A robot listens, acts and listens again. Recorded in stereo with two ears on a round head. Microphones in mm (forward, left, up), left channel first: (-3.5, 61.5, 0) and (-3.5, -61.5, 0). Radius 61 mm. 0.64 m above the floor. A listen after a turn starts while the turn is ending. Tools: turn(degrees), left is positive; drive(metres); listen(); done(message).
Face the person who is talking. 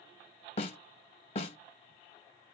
listen()
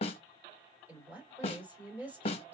turn(degrees=-30)
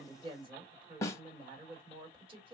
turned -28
turn(degrees=-140)
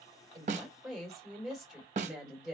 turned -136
done("Found it: a woman speaking, straight ahead, 2 to 4 m away.")